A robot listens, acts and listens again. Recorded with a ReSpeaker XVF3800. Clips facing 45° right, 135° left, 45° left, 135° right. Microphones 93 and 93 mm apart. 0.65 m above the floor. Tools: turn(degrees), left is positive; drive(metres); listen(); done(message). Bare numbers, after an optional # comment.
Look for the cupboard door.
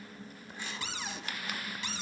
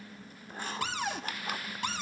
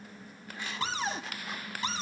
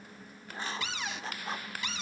# The cupboard door: 100° left.
turn(100)
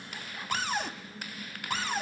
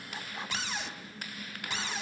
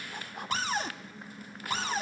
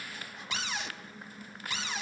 done("Facing the cupboard door, 1 to 2 m away.")